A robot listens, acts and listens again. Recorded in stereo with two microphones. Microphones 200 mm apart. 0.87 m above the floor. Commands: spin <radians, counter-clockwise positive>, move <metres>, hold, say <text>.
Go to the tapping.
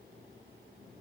hold
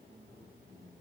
hold
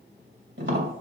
spin -1.22
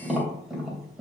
move 1.0
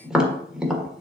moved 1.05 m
move 1.0
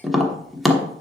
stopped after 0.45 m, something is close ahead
say I am next to the tapping.